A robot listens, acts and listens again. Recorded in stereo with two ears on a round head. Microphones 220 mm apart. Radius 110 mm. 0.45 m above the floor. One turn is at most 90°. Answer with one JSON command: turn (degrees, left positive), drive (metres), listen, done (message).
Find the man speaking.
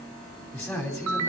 {"turn": 30}
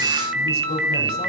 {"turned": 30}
{"listen": true}
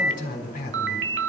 {"turn": 90}
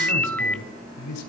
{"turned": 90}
{"turn": 85}
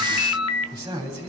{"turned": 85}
{"turn": -15}
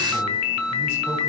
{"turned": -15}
{"listen": true}
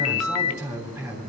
{"done": "Found it: a man speaking, straight ahead, 2 to 4 m away."}